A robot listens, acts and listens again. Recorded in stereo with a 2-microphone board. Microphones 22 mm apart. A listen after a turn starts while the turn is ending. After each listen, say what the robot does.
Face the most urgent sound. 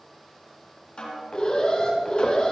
Turn 40° left.
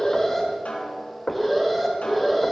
Facing the alarm.